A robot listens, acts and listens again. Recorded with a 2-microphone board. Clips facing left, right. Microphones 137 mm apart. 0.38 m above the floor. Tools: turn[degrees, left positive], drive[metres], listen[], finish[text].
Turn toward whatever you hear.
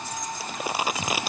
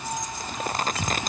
Action: turn[30]
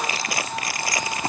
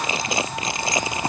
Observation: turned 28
Thought: So it is at 20° right.
Action: turn[-20]
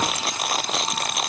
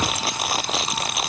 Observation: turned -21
Action: finish[Facing the crumpling.]